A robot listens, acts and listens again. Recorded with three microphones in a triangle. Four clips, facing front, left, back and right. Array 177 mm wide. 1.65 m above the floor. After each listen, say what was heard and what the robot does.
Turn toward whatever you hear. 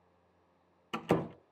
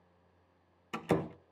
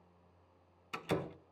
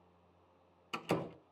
The door slam: 25° left. Turn 25° left.
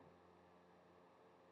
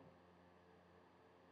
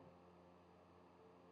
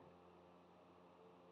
Facing where the door slam came from. I can't hear it now.